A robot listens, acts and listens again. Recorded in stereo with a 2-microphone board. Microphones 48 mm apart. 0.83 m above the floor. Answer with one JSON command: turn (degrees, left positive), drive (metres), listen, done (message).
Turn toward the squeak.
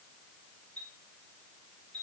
{"listen": true}
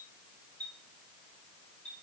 {"listen": true}
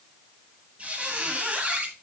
{"turn": -30}
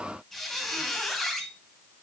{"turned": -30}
{"done": "Found it: a squeak, straight ahead."}